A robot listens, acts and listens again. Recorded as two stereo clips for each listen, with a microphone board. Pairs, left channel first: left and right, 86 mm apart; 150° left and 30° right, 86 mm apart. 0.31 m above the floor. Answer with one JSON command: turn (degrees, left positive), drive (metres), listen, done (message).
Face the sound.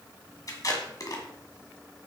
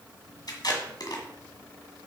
{"turn": 125}
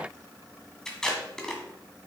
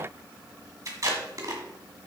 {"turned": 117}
{"turn": 10}
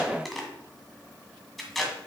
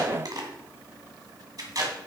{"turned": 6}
{"done": "Facing the tape being pulled."}